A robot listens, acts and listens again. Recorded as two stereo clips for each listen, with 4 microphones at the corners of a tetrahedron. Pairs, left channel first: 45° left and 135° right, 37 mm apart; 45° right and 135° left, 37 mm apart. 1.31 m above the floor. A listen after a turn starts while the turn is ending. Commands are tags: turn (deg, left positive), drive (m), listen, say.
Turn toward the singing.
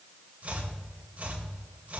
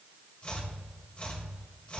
<listen/>
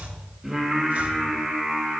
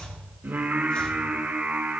<turn deg="150"/>
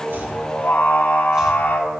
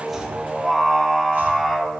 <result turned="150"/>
<turn deg="45"/>
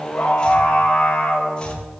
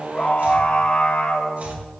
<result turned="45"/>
<say>Found it: singing, straight ahead.</say>